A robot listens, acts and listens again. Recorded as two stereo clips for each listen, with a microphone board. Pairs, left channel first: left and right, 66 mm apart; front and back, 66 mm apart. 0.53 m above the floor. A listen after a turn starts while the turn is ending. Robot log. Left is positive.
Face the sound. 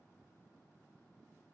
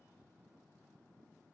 cmd idle
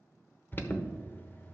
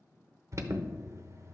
note: The alarm: 145° left.
cmd yaw +145
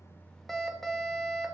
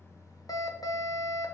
end: Facing the alarm.